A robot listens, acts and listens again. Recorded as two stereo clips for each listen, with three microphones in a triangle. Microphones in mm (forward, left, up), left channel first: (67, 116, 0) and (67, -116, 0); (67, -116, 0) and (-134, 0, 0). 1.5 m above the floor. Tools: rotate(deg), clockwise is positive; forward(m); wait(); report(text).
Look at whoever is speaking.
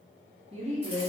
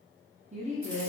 rotate(150)
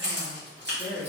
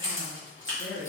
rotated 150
rotate(15)
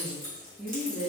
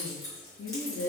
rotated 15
report("Found it: a woman speaking, straight ahead.")